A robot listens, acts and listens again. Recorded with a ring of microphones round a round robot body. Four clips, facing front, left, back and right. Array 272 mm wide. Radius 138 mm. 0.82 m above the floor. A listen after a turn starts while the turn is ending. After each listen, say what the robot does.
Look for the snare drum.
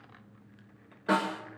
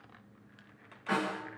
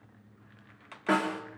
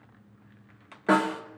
Turn 100° right.
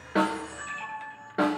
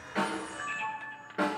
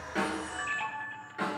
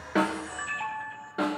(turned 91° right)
Turn 10° right.
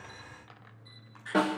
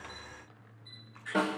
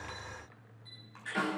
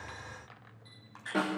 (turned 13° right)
Found it: a snare drum, straight ahead, 2 to 4 m away.